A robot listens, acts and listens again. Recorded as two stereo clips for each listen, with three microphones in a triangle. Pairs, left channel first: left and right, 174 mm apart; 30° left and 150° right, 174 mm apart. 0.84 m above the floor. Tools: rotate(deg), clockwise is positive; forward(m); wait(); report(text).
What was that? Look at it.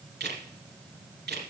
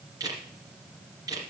rotate(80)
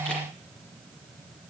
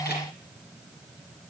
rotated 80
wait()
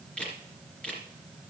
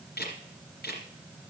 report("Facing the camera shutter.")